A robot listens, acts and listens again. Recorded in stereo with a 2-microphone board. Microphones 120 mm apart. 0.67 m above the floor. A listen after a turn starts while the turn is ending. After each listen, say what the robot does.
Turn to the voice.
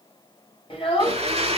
Turn 50° left.
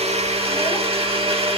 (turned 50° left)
Keep listening.
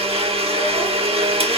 Keep listening.
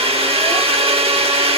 I heard a child speaking, but can't make it out now. It was about straight ahead or 80° left.